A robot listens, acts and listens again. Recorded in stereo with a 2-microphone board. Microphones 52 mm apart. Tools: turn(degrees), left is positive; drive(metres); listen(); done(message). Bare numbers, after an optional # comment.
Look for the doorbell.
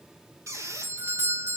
# The doorbell: about 55° right or 125° right.
turn(-55)
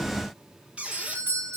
# So it is at 55° right.
turn(-55)
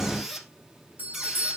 # The doorbell is now 40° right.
turn(-40)
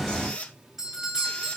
# The doorbell is now 10° right.
turn(-10)
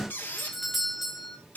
done("Facing the doorbell, 2 to 4 m away.")